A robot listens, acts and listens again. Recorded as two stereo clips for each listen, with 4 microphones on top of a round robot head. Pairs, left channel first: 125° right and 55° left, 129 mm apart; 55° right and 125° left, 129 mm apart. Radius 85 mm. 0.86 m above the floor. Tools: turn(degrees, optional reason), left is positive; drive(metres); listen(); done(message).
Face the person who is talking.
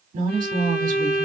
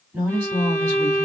turn(degrees=50, reason="The woman speaking: 50° left.")
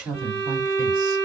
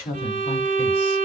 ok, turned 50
turn(degrees=-10, reason="The woman speaking is now 10° right.")
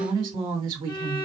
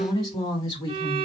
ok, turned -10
done("Facing the woman speaking, 2 to 4 m away.")